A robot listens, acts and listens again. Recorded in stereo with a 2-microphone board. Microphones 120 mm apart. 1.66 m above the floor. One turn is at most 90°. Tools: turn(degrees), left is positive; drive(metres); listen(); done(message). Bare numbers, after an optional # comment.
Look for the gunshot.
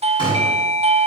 # The gunshot: about 45° left or 135° left.
turn(45)
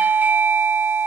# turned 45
listen()
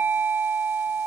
done("I heard a gunshot, but can't make it out now. It was about straight ahead or 90° left.")